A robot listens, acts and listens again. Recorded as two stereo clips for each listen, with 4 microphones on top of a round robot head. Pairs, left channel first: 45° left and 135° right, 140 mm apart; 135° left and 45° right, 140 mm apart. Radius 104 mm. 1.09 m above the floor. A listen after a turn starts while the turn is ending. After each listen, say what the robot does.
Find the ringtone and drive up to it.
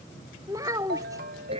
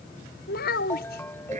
Turn 145° right.
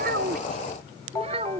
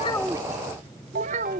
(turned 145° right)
Turn 30° right.
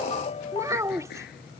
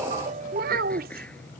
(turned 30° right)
Drive 1.0 m forward.
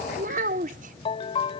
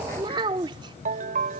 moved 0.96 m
Turn 10° right.
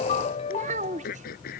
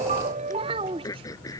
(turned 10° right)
Drive 1.0 m forward.
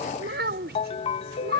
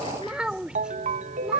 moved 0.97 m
Drive 1.0 m forward.
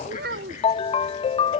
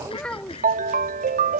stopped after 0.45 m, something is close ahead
Turn 10° right.
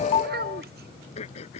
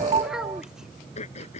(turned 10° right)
Arrived at the ringtone, straight ahead.